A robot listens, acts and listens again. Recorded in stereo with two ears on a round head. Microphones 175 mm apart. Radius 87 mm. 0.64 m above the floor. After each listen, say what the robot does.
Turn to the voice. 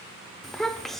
Turn 30° left.
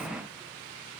Keep listening.
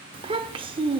Turn 30° right.
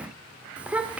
Found it: a child speaking, straight ahead.